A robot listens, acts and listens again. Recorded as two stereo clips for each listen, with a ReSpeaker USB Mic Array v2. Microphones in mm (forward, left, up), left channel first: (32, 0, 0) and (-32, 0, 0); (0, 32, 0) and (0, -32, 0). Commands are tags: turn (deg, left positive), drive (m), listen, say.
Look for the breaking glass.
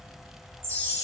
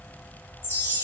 <listen/>
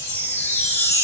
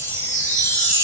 <listen/>
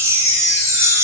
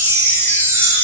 <say>I can't make out breaking glass, only a chime.</say>